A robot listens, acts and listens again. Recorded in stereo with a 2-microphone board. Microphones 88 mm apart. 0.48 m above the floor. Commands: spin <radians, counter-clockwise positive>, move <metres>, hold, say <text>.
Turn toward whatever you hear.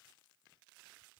hold
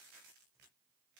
hold
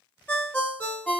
spin 0.35
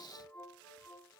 hold
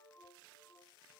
hold
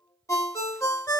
spin 2.44
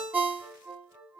spin -0.44
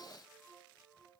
hold
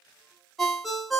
say Found it: a ringtone, straight ahead, 1 to 2 m away.